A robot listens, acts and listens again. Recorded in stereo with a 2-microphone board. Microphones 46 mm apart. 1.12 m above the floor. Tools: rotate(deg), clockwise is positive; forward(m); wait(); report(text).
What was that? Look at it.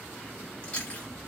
rotate(-30)
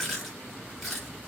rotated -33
report("Facing the chewing.")